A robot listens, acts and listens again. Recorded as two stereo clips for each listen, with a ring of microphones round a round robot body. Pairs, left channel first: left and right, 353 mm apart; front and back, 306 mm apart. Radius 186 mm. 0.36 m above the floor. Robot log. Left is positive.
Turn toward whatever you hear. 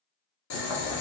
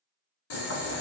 note: The boiling: 45° left.
cmd yaw +45
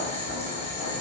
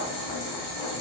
note: The boiling is now 15° left.
cmd yaw +15
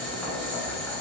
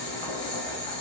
end: Facing the boiling.